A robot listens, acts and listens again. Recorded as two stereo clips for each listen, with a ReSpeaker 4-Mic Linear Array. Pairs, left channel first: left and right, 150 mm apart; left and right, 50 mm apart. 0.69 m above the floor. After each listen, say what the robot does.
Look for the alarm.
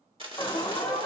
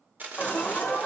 Turn 30° left.
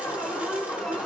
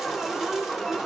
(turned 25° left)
Found it: an alarm, straight ahead.